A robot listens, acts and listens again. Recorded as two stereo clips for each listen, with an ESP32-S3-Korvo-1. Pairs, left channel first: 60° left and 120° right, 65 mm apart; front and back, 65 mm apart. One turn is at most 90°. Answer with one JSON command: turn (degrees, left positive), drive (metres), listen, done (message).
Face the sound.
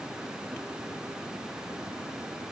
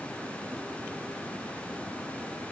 {"listen": true}
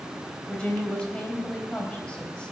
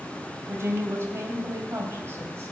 {"turn": 90}
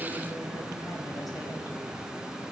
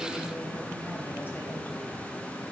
{"turn": 45}
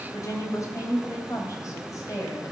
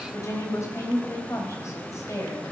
{"turn": 35}
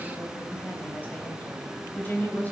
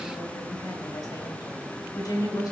{"done": "Facing the woman speaking, 2 to 4 m away."}